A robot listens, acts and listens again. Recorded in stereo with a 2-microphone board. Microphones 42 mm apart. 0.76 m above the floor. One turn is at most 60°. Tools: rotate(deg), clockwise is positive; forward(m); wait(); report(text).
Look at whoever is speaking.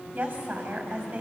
rotate(35)
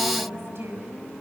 rotate(60)
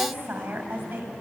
rotate(60)
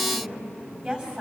rotate(30)
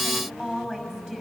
rotate(10)
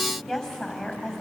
report("Facing the woman speaking.")